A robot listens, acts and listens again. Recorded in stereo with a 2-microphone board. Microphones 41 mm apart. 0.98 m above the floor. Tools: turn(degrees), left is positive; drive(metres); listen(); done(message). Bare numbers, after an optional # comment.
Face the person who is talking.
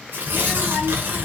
# The child speaking: about 25° right or 155° right.
turn(-25)
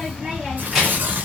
done("Found it: a child speaking, straight ahead.")